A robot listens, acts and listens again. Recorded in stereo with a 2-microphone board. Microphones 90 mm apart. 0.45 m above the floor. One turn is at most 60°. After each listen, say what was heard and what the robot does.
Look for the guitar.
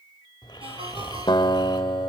The guitar: about 60° left or 120° left. Turn 60° left.
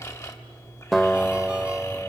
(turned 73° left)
Found it: a guitar, straight ahead, 1 to 2 m away.